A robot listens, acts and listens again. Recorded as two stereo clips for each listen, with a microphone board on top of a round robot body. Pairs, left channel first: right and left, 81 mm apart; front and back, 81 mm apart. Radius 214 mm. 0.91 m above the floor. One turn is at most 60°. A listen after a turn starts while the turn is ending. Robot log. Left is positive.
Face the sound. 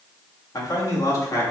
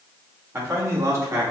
note: The man speaking: 135° right.
cmd yaw -60
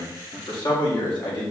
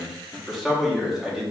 note: The man speaking is now 100° right.
cmd yaw -60
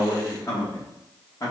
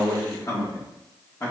note: The man speaking is now 55° right.
cmd yaw -55
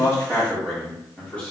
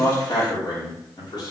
note: The man speaking is now 15° right.
cmd yaw -15
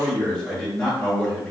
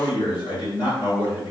end: Facing the man speaking.